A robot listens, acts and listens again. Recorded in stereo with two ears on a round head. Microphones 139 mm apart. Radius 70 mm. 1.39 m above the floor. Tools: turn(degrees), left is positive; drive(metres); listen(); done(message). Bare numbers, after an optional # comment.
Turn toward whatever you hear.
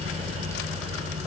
listen()
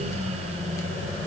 listen()
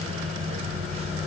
done("I can't make out anything.")